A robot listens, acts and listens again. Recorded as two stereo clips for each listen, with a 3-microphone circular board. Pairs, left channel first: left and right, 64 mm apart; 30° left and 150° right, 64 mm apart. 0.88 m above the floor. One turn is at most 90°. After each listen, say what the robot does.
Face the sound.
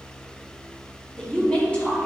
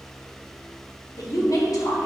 Turn 25° left.
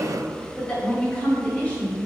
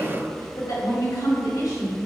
Turn 25° left.
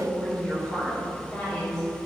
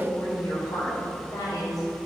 Found it: a woman speaking, straight ahead, 2 to 4 m away.